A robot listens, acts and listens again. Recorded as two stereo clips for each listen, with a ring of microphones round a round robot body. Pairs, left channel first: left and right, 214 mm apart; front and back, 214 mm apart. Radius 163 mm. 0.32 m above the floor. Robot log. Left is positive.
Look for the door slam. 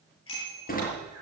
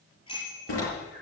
note: The door slam: 40° left.
cmd yaw +40
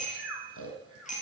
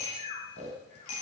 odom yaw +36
end: I heard a door slam from this way, but can't make it out now.